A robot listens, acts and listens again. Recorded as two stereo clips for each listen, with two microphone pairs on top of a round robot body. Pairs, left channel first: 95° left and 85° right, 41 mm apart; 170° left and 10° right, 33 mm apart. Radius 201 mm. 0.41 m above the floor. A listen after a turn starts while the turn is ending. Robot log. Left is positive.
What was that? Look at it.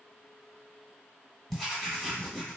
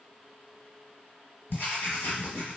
note: The writing: 175° right.
cmd yaw -175
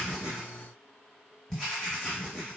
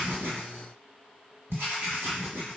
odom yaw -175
end: Facing the writing.